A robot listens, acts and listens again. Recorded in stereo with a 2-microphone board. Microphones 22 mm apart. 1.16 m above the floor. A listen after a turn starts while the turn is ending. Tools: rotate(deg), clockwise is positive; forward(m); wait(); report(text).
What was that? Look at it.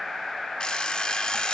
rotate(-35)
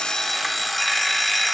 report("Facing the alarm clock, 1 to 2 m away.")